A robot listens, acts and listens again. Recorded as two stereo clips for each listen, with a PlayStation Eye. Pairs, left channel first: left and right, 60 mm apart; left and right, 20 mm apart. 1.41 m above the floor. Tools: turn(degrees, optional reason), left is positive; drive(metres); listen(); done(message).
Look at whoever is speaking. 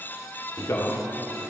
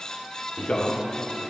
turn(degrees=65, reason="The man speaking: about 65° left or 115° left.")
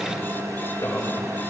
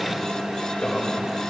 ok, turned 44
turn(degrees=65, reason="So it is at 65° left.")
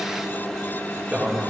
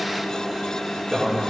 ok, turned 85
turn(degrees=-20, reason="The man speaking is now 20° right.")
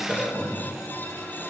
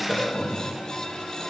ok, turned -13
done("Found it: a man speaking, straight ahead, 2 to 4 m away.")